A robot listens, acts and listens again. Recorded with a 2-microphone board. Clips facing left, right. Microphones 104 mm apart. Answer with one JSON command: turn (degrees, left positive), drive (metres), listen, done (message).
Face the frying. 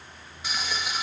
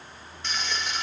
{"turn": 30}
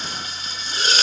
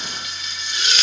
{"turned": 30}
{"turn": 140}
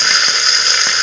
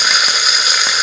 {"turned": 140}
{"done": "Facing the frying."}